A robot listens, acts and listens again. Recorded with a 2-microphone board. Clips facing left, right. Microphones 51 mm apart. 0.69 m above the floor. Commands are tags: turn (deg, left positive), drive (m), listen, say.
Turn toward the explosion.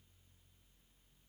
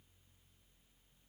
<listen/>
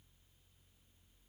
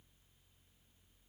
<listen/>
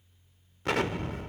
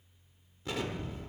<turn deg="70"/>
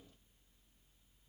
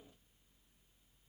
<listen/>
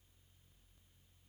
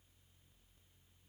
<say>I heard an explosion, but can't make it out now. It was about straight ahead or 40° left.</say>